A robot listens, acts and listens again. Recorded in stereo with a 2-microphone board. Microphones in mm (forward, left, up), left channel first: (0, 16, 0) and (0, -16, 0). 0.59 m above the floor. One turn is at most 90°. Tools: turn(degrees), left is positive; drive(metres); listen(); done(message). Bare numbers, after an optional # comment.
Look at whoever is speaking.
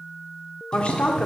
# The woman speaking: about 45° left or 135° left.
turn(45)
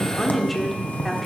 done("Found it: a woman speaking, straight ahead.")